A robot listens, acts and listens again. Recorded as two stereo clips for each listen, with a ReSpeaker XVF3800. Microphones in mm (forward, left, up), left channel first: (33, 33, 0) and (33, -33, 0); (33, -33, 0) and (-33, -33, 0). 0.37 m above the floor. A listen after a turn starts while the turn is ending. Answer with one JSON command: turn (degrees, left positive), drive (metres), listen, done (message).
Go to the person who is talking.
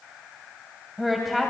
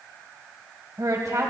{"turn": 180}
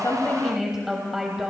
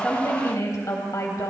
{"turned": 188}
{"drive": 1.0}
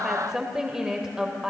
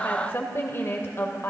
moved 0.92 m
{"turn": -15}
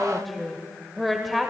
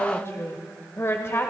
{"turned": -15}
{"drive": 1.0}
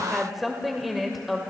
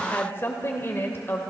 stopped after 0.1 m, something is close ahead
{"done": "Arrived at the woman speaking, straight ahead."}